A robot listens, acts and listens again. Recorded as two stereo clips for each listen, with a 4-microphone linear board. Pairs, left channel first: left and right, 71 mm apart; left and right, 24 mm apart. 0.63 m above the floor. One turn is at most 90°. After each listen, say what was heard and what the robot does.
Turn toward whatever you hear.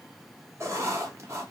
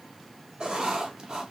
The writing: about 40° right or 140° right. Turn 40° right.
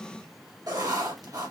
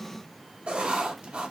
So it is at 90° right. Turn 90° right.
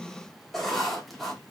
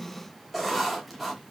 Facing the writing, 1 to 2 m away.